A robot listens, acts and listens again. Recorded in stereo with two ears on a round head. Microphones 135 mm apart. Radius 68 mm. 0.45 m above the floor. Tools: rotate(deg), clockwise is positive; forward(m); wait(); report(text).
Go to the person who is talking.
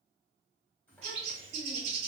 rotate(-30)
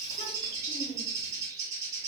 rotate(-135)
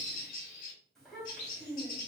forward(1.0)
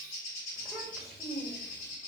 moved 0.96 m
forward(1.0)
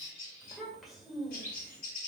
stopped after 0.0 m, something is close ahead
report("Arrived at the child speaking, straight ahead.")